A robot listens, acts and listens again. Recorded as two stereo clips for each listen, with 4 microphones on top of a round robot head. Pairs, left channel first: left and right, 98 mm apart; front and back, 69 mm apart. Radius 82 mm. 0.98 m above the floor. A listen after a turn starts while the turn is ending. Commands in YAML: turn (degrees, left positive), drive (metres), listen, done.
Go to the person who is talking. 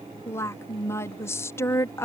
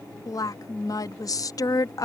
turn: 25
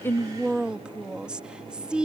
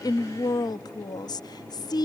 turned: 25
turn: -10
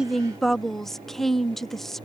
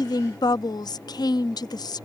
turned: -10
drive: 1.0
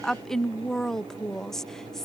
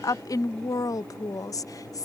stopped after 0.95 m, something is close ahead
done: "I am next to the woman speaking."